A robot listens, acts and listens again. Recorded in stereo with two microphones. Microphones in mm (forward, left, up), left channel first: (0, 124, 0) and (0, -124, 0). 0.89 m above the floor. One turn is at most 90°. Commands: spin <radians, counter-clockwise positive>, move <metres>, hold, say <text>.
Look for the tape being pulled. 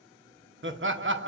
hold
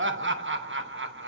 hold
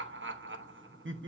say I can't make out tape being pulled to turn to.